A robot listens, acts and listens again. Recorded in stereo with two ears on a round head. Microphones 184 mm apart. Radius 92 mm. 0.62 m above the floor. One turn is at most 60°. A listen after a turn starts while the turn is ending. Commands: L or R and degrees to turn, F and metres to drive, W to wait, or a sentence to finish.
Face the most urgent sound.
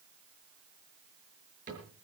W
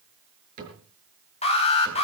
L30
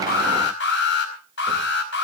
L60
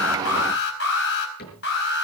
L60
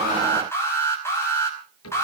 L15
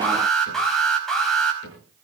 Found it: an alarm, straight ahead, over 4 m away.